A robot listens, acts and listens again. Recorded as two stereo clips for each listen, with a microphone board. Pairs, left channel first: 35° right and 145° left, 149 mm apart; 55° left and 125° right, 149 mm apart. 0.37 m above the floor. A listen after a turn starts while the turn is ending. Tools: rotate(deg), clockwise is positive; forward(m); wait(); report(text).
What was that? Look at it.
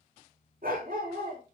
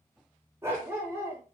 rotate(-160)
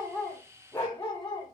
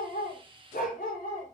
rotate(-40)
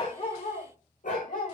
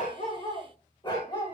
report("Facing the dog barking, over 4 m away.")